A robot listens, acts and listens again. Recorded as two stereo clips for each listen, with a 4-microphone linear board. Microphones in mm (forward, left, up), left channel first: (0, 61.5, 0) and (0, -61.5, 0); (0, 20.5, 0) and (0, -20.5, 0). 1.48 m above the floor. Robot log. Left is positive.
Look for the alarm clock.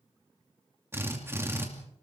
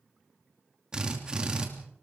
cmd idle
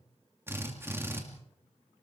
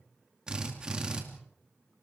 cmd idle
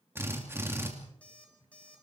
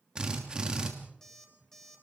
cmd yaw +30
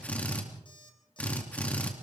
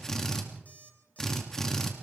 note: So it is at 140° left.
cmd yaw +140
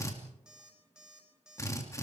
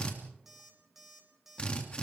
end: Facing the alarm clock, over 4 m away.